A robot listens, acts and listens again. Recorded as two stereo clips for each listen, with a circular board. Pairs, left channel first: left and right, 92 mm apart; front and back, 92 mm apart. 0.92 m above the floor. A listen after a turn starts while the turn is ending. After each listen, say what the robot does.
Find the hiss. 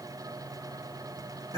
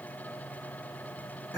Keep listening.
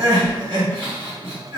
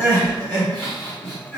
Keep listening.
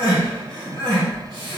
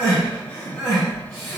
I can't make out a hiss to turn to.